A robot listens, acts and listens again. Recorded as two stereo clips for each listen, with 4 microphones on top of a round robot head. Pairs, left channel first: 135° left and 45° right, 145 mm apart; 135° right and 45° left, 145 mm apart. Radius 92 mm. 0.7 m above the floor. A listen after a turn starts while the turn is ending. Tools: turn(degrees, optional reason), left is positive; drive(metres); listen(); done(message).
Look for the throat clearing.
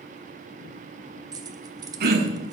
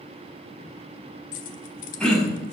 turn(degrees=-50, reason="The throat clearing: 50° right.")
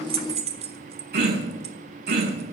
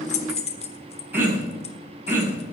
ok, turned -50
turn(degrees=-35, reason="The throat clearing is now 35° right.")
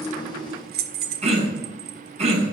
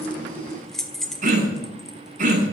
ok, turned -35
done("Facing the throat clearing, over 4 m away.")